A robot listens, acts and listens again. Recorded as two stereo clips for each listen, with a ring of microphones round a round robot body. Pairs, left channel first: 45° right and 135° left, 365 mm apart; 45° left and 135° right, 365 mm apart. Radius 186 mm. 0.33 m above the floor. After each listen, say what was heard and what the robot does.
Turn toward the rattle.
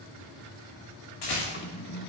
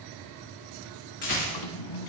The rattle: 15° right. Turn 15° right.
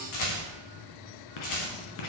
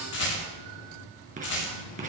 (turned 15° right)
Facing the rattle, over 4 m away.